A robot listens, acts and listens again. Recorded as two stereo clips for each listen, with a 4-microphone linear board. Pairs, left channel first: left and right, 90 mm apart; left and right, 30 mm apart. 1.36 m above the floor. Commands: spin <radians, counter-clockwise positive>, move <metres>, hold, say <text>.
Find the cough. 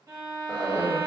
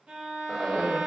spin 0.61
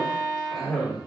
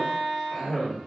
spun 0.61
say Facing the cough.